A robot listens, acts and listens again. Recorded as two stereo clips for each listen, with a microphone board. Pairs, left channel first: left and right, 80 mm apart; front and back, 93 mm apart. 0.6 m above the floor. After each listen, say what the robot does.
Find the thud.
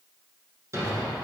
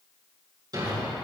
Turn 140° right.
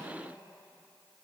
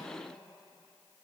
Facing where the thud came from. I can't hear it now.